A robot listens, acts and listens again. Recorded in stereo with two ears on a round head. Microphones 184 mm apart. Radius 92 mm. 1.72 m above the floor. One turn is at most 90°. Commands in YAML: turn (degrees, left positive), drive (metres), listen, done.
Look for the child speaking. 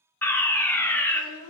turn: 90
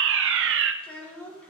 done: "Found it: a child speaking, straight ahead, 2 to 4 m away."